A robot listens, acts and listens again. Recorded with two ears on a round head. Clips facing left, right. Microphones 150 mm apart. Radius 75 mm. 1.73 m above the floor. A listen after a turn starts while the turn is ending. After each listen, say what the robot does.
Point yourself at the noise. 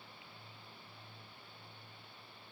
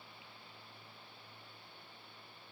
Keep listening.
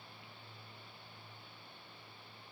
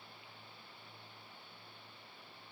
Keep listening.
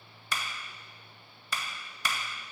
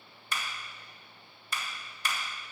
Turn 65° left.
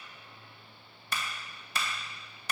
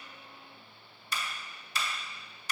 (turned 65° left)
Turn 45° left.
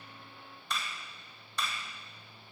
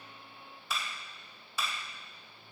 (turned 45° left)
Facing the clap, 2 to 4 m away.